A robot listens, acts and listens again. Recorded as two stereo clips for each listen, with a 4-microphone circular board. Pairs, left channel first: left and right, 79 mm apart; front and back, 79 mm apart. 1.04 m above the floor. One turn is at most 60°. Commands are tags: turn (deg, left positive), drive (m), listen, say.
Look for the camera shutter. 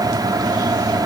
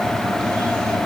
<listen/>
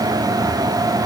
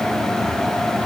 <listen/>
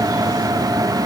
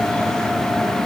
<say>I can't make out a camera shutter to turn to.</say>